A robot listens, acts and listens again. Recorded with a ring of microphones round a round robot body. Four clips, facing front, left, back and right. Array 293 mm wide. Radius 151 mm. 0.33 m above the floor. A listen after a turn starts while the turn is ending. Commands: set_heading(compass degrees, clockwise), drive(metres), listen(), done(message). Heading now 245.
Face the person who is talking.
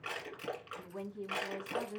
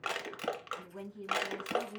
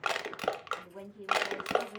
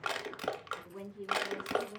set_heading(255)
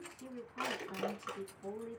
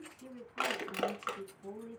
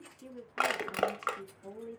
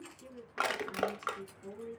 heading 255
done("Found it: a woman speaking, straight ahead, 2 to 4 m away.")